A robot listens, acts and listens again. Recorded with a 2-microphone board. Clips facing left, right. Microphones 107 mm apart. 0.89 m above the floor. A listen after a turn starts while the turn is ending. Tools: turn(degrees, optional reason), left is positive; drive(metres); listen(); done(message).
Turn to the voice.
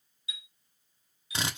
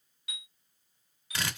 listen()
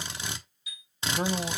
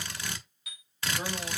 turn(degrees=65, reason="The man speaking: about 65° left or 115° left.")
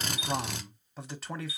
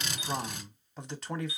done("Facing the man speaking, 1 to 2 m away.")